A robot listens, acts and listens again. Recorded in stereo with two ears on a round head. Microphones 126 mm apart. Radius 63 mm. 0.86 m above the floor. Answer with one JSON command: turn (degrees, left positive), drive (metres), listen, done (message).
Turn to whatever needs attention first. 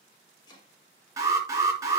{"turn": -25}
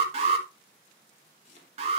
{"turn": -125}
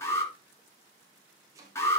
{"turn": 25}
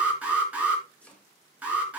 {"turn": -10}
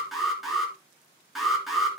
{"done": "Facing the alarm, 2 to 4 m away."}